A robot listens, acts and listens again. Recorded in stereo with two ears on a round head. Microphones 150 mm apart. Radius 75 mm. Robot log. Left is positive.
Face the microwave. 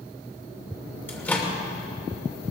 cmd yaw +30
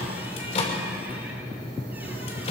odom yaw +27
note: So it is at 140° left.
cmd yaw +140
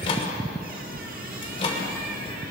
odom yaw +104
note: The microwave is now 35° left.
cmd yaw +35
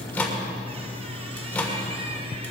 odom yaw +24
note: The microwave is now 10° left.
cmd yaw +10
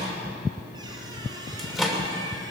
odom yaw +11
end: Found it: a microwave, straight ahead, 2 to 4 m away.